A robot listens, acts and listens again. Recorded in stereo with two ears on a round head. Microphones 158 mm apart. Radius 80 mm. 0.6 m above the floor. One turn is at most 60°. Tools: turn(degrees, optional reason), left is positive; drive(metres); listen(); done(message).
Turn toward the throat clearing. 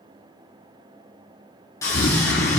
turn(degrees=60, reason="The throat clearing: about 65° left or 115° left.")
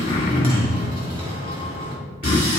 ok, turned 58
turn(degrees=45, reason="So it is at 45° left.")
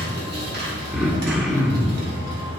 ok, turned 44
done("Facing the throat clearing, under 1 m away.")